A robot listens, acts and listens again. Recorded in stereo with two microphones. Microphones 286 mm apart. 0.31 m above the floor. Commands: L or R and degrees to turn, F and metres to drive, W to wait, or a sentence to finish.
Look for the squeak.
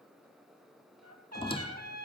L20
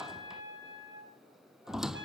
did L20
Found it: a squeak, straight ahead.